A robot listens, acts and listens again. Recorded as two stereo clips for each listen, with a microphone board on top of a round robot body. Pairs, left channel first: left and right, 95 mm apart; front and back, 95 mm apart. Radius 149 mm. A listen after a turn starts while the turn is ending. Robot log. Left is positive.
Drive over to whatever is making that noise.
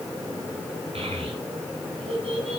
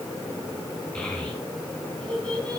note: The child speaking: 80° right.
cmd yaw -80
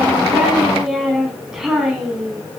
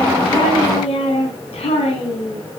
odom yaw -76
cmd fwd 1.0
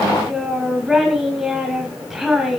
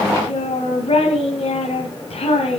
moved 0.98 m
cmd fwd 1.0
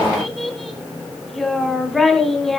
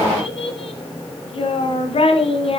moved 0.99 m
cmd fwd 1.0
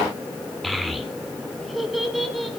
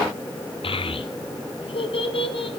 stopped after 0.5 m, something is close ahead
end: Arrived at the child speaking, straight ahead.